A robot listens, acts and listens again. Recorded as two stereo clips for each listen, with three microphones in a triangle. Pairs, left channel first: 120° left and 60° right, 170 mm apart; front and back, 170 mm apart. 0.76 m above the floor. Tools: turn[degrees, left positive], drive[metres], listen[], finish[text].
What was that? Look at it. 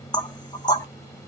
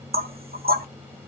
Thought: The knocking: straight behind.
Action: turn[180]
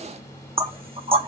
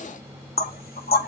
Action: finish[Found it: knocking, straight ahead.]